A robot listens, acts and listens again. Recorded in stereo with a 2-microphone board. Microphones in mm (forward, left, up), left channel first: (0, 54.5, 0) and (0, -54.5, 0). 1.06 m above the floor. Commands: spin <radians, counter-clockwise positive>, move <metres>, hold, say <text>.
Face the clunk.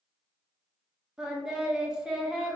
hold
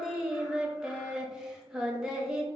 hold
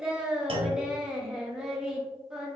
spin -0.96
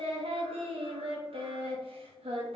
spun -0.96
hold
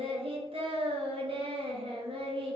say I heard a clunk, but can't make it out now. It was about straight ahead or 70° right.